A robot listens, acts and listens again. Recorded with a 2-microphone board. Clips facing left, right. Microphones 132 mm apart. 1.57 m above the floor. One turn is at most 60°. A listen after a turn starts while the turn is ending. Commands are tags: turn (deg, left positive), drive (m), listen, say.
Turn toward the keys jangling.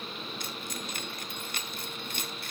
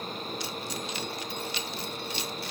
<turn deg="50"/>
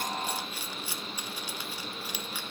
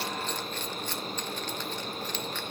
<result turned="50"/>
<turn deg="10"/>
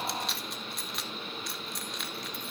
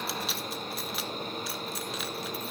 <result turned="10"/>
<say>Found it: keys jangling, straight ahead, under 1 m away.</say>